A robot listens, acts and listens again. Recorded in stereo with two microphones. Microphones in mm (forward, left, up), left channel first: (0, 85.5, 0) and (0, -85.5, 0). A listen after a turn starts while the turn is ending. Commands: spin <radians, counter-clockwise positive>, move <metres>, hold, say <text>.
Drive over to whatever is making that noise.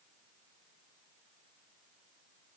hold
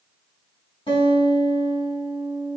spin 0.61
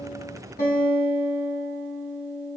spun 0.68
spin 1.83
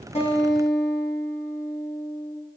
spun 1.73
move 1.0
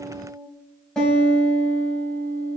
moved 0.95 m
move 1.0
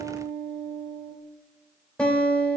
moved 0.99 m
move 1.0
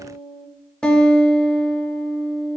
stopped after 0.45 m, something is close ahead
say Arrived at the guitar, straight ahead.